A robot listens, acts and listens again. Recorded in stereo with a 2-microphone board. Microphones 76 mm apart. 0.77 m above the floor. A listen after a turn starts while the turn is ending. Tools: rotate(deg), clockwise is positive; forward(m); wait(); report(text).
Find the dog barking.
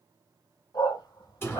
rotate(-90)
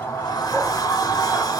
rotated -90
wait()
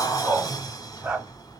rotate(25)
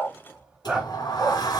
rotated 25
rotate(20)
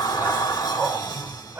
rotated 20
wait()
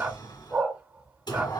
rotate(25)
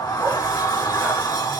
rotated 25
wait()
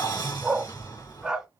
rotate(10)
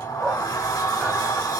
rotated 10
report("Found it: a dog barking, straight ahead, 1 to 2 m away.")